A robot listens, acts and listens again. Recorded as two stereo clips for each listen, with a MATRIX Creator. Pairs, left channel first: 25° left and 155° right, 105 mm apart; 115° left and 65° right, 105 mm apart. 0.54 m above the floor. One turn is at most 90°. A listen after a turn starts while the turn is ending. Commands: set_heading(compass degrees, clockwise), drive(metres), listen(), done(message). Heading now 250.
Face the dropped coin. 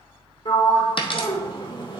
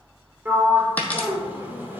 set_heading(210)
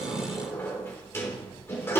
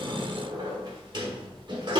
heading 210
done("I heard a dropped coin from this way, but can't make it out now.")